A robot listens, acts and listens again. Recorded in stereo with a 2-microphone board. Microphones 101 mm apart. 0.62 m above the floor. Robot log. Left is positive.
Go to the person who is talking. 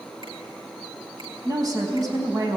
note: The woman speaking: about 35° right or 145° right.
cmd yaw -35
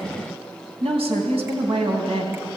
note: So it is at 105° right.
cmd yaw -105
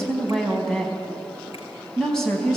cmd fwd 1.0
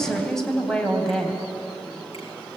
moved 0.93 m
cmd fwd 1.0
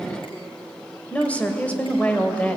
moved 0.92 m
note: The woman speaking is now 15° left.
cmd yaw +15
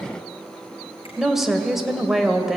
cmd fwd 1.0
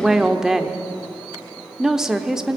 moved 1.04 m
cmd fwd 1.0
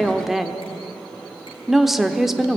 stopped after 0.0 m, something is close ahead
end: Arrived at the woman speaking, straight ahead.